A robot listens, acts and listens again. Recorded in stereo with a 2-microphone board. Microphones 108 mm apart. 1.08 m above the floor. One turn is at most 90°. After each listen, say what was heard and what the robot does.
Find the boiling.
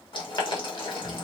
The boiling: about 50° left or 130° left. Turn 50° left.
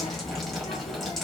Keep listening.
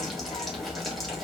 Keep listening.
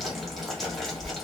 I heard boiling, but can't make it out now. It was about straight ahead or 80° left.